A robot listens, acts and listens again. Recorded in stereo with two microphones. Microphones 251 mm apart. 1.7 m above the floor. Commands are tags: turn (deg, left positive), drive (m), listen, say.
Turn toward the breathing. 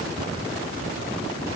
<listen/>
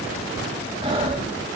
<turn deg="-20"/>
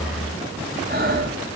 <turn deg="-140"/>
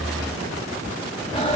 <turn deg="20"/>
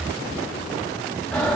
<say>Found it: breathing, straight ahead, over 4 m away.</say>